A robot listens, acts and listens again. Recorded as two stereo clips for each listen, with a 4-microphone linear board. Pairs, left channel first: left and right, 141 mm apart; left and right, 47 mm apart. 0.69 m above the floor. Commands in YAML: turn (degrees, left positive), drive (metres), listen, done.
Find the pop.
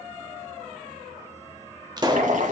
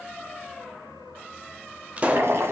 turn: -30
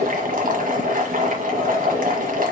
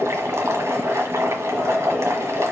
listen: true
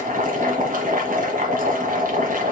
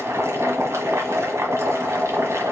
done: "I heard a pop, but can't make it out now. It was about straight ahead or 120° right."